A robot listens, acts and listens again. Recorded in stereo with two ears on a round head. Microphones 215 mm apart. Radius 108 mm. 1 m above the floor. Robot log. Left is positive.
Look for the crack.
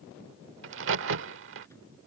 note: The crack: about 60° right or 120° right.
cmd yaw -60
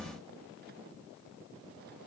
cmd idle
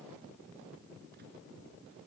end: I heard a crack, but can't make it out now. It was about straight ahead or 60° right.